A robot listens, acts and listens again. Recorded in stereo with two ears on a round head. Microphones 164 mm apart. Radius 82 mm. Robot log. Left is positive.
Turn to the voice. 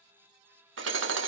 cmd idle
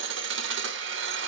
cmd idle
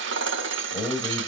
note: The man speaking: about 20° left or 160° left.
cmd yaw +20
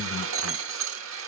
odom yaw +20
cmd yaw +30
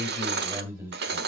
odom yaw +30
note: So it is at 20° right.
cmd yaw -20
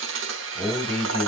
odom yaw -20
end: Facing the man speaking.